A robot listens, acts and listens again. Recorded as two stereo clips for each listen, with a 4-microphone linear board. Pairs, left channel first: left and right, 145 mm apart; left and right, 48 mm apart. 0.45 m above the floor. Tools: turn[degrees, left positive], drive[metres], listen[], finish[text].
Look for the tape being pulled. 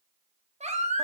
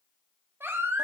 Action: listen[]
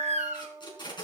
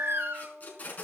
Thought: The tape being pulled: about 30° left or 150° left.
Action: turn[30]
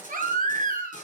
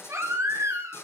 Thought: So it is at 120° left.
Action: turn[120]
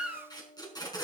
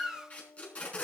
Thought: The tape being pulled is now 30° left.
Action: turn[30]
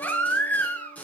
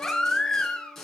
Thought: The tape being pulled is now 10° left.
Action: turn[10]
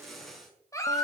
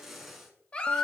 Action: finish[Found it: tape being pulled, straight ahead.]